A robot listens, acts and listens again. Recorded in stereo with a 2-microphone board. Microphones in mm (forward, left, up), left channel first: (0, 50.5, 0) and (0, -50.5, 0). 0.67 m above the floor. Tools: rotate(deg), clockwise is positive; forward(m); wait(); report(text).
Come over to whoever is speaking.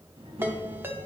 rotate(65)
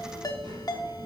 rotate(50)
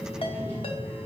rotate(-10)
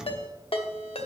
wait()
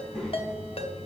forward(1.0)
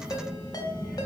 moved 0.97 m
forward(1.0)
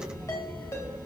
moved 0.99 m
rotate(-10)
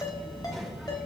forward(1.0)
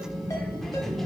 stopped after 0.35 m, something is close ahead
report("I am next to the child speaking.")